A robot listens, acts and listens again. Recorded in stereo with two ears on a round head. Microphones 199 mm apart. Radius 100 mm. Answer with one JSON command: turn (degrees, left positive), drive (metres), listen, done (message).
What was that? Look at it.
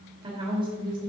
{"turn": -25}
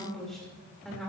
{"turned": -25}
{"done": "Facing the woman speaking, 2 to 4 m away."}